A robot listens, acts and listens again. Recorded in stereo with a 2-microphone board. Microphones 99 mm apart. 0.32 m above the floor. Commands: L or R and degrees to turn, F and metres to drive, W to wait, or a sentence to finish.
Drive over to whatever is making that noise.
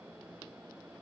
W
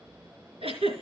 R90
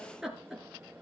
F1.0
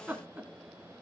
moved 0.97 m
R20
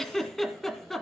F1.0
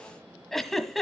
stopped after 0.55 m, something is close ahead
Arrived at the giggle, straight ahead.